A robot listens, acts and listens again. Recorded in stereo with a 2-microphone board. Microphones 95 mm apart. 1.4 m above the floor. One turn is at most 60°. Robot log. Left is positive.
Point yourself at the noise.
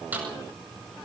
note: The snare drum: about 20° right or 160° right.
cmd yaw -20
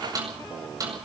note: So it is at 140° right.
cmd yaw -60
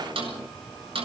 note: The snare drum is now 70° right.
cmd yaw -60
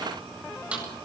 note: The snare drum is now 10° right.
cmd yaw -10
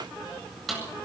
end: Found it: a snare drum, straight ahead, over 4 m away.